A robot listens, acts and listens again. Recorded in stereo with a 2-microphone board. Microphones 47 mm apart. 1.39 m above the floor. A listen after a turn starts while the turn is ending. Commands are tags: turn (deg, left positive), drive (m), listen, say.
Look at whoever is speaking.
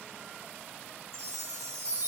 <listen/>
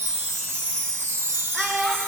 <turn deg="30"/>
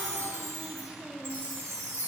<listen/>
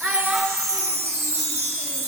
<turn deg="-20"/>
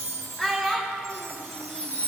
<say>Facing the child speaking.</say>